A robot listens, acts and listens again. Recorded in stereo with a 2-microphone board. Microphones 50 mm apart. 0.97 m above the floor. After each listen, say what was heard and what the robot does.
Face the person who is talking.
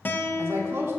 The woman speaking: about 60° right or 120° right. Turn 60° right.
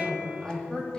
So it is at 15° left. Turn 15° left.
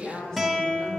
The woman speaking is now 10° left. Turn 10° left.
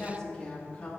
The woman speaking is now 20° left. Turn 20° left.
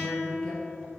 Keep listening.
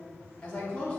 The woman speaking is now 20° left. Turn 20° left.
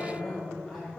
Found it: a woman speaking, straight ahead, 2 to 4 m away.